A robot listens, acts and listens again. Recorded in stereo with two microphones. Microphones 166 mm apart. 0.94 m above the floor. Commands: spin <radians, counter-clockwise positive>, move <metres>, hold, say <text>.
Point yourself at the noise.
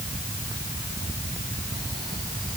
hold
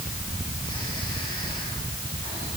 hold
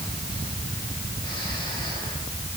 say I can't make out anything to turn to.